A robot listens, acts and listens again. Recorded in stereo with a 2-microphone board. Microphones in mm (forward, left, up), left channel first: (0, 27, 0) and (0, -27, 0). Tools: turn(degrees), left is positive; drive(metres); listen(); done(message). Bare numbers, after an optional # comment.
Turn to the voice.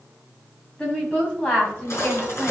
# The woman speaking: about 20° left or 160° left.
turn(20)
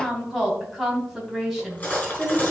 done("Facing the woman speaking, over 4 m away.")